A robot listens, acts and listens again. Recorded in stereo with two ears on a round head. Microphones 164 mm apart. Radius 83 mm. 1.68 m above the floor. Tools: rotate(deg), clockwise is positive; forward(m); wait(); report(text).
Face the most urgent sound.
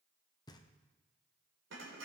wait()
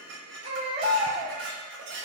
rotate(35)
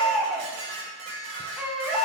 report("Found it: a baby crying, straight ahead, 2 to 4 m away.")